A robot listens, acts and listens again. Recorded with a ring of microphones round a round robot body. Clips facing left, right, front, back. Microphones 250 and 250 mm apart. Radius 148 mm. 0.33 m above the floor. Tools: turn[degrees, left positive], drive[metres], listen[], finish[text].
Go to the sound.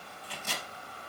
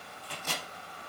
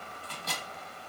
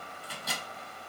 Thought: The microwave: 100° right.
Action: turn[-100]
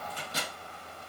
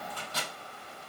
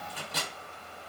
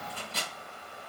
Thought: The microwave is now 15° left.
Action: turn[15]
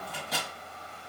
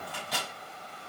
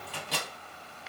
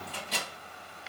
Action: drive[1.0]
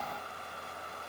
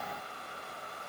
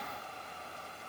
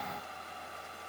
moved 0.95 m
Action: listen[]
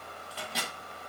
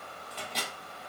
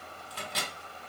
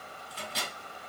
Action: drive[1.0]
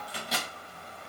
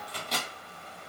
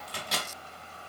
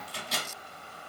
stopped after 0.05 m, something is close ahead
Action: finish[Arrived at the microwave, straight ahead.]